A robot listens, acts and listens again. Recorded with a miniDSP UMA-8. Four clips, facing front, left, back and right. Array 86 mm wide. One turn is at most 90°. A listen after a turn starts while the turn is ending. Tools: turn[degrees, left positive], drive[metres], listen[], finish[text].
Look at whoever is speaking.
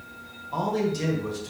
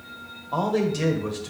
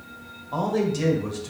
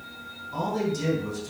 Thought: The man speaking: 110° left.
Action: turn[90]
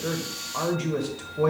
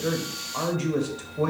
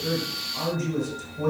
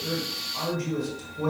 Thought: The man speaking is now 45° left.
Action: turn[45]
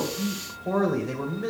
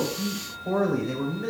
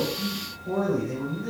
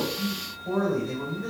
Thought: The man speaking is now 25° left.
Action: turn[25]
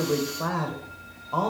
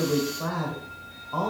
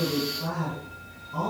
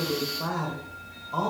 Action: finish[Found it: a man speaking, straight ahead, 1 to 2 m away.]